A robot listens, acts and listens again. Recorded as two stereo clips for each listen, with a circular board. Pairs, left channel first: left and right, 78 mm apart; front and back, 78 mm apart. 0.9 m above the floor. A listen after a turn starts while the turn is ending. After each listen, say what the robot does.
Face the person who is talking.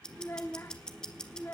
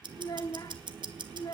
Turn 30° left.
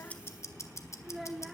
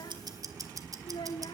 Found it: a child speaking, straight ahead.